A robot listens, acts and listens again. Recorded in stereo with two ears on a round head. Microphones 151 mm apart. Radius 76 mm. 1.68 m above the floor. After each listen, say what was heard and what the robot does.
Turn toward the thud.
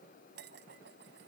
Keep listening.
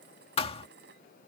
The thud: about 35° left or 145° left. Turn 35° left.
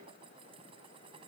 Keep listening.
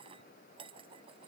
I heard a thud, but can't make it out now. It was about straight ahead or 110° left.